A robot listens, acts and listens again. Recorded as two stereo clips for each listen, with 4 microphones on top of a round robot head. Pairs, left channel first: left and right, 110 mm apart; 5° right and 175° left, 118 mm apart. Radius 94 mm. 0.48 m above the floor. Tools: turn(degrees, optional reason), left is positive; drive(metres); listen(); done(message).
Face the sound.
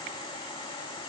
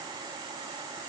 listen()
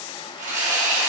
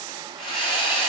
turn(degrees=-60, reason="The sawing: 60° right.")
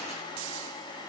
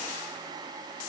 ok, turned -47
turn(degrees=-15, reason="Nothing new. It was at 15° right.")
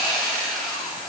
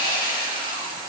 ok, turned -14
done("Facing the sawing.")